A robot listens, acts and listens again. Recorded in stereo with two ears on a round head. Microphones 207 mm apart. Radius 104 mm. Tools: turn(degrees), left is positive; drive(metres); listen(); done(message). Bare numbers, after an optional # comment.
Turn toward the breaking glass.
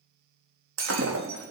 # The breaking glass: about 60° right or 120° right.
turn(-60)
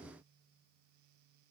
listen()
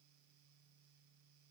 done("I heard breaking glass, but can't make it out now. It was about straight ahead or 60° right.")